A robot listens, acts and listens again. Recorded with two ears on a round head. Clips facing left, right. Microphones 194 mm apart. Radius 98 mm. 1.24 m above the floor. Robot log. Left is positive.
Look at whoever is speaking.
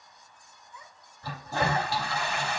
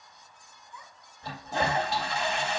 note: The child speaking: about 45° right or 135° right.
cmd yaw -45
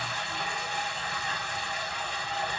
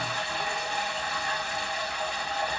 cmd idle
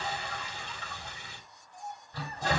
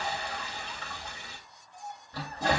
end: Found it: a child speaking, straight ahead.